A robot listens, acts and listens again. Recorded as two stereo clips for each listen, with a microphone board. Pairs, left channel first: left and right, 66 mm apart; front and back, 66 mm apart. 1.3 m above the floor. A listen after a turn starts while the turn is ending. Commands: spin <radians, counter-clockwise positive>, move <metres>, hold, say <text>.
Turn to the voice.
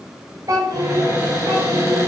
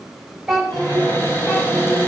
spin -1.66
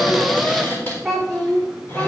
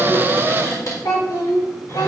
spin 0.17
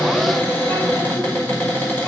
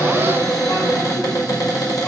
hold
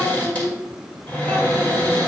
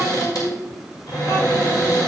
say Found it: a child speaking, straight ahead.